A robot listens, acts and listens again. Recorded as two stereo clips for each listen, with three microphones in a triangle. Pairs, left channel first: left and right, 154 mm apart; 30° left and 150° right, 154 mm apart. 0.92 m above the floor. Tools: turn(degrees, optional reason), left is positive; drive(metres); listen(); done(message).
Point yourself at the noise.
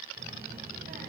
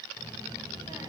turn(degrees=-85, reason="The child speaking: 85° right.")
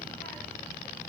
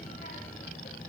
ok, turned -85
done("Found it: a child speaking, straight ahead.")